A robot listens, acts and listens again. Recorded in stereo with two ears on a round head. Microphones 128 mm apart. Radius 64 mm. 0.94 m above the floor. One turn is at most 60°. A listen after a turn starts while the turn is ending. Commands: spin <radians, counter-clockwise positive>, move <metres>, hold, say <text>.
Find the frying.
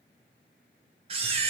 hold
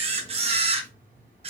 hold
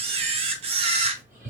say I can't make out frying to turn to.